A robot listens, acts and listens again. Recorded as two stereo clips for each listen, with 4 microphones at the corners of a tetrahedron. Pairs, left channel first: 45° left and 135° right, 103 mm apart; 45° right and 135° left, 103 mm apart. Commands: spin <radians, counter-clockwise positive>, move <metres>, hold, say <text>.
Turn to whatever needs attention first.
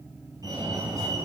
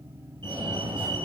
spin 3.05
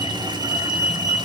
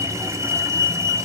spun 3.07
say Facing the fire alarm.